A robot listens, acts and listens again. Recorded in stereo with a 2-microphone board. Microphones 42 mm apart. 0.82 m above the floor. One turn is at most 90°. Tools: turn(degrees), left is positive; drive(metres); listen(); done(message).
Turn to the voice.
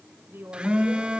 turn(degrees=-65)
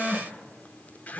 listen()
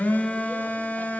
listen()
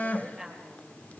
done("Facing the woman speaking, over 4 m away.")